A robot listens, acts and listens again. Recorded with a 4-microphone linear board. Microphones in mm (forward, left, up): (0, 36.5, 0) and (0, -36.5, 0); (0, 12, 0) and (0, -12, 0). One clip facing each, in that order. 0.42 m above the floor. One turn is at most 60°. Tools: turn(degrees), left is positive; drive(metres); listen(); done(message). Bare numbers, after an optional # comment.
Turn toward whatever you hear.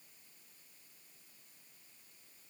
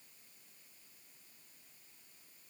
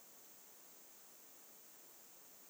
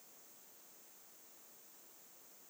listen()
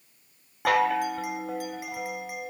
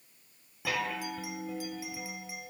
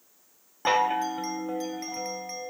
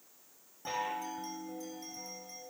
# The chime: about 55° left or 125° left.
turn(55)
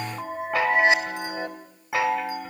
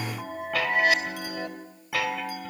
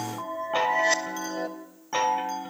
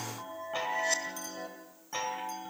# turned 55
# So it is at 30° left.
turn(30)
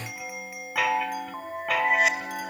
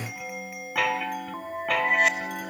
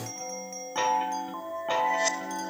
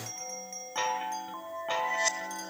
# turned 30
done("Facing the chime, 2 to 4 m away.")